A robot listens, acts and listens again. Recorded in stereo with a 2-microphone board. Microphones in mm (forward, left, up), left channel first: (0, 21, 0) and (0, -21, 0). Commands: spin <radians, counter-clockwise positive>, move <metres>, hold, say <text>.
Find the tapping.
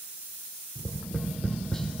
spin 0.26
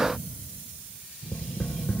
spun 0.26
spin 2.62
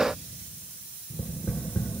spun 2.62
spin 1.05
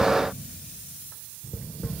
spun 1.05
spin 0.26
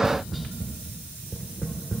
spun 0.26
say Found it: tapping, straight ahead.